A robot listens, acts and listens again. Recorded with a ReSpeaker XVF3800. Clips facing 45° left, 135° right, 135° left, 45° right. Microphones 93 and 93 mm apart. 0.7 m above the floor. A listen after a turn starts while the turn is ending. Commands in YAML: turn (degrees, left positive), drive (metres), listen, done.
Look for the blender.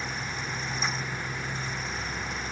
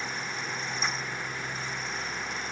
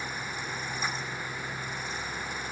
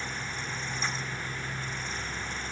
listen: true
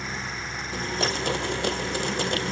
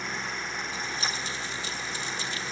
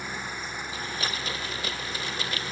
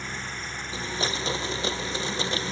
turn: 20
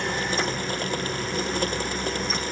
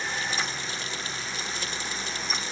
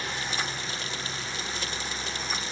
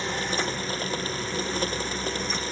done: "Facing the blender."